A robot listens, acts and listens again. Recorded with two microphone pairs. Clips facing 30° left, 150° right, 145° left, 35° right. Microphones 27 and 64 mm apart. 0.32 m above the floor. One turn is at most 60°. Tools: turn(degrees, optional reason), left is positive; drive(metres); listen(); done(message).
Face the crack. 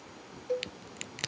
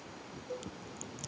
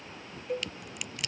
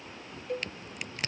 turn(degrees=20, reason="The crack: 20° left.")
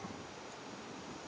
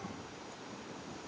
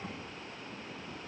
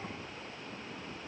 done("I heard a crack from this way, but can't make it out now.")